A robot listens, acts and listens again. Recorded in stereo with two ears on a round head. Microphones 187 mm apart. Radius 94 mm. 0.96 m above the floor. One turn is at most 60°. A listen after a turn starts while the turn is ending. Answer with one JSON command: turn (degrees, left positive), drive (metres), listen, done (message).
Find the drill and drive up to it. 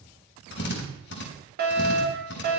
{"turn": 55}
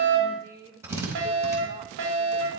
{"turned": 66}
{"turn": -15}
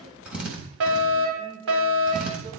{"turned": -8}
{"drive": 1.0}
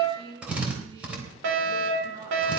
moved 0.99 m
{"drive": 1.0}
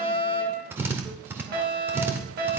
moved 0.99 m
{"turn": -10}
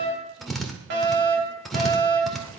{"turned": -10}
{"drive": 1.0}
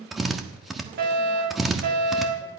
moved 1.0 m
{"drive": 1.0}
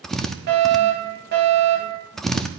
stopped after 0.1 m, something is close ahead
{"done": "I am next to the drill."}